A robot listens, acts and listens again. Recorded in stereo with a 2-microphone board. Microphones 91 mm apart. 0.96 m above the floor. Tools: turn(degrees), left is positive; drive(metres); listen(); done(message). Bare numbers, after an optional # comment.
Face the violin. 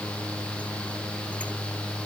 listen()
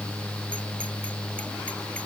listen()
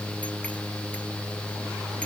done("I can't make out a violin to turn to.")